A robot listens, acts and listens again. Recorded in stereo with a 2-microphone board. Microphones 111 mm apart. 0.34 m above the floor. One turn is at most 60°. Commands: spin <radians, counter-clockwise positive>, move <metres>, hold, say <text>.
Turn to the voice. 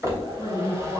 spin 0.26
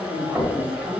spin 0.52
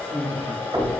spin 1.05
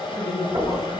spin 1.05
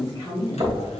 spin 0.61
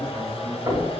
hold
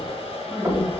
spin 0.17
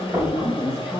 say Facing the woman speaking, 2 to 4 m away.